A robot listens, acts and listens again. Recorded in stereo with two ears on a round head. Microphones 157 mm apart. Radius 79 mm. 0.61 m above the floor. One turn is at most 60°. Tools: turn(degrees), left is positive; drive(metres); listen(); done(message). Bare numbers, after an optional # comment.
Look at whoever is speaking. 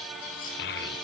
# The child speaking: about 60° left or 120° left.
turn(60)
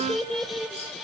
done("Facing the child speaking.")